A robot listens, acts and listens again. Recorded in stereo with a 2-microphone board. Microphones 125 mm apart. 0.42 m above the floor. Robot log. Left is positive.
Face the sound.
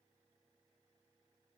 cmd idle
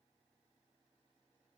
cmd idle
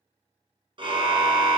note: The car horn: about 40° right or 140° right.
cmd yaw -40
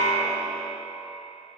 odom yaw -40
note: So it is at 100° right.
cmd yaw -100
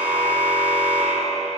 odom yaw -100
note: The car horn is now 10° right.
cmd yaw -10
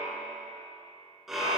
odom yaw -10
end: Facing the car horn, 2 to 4 m away.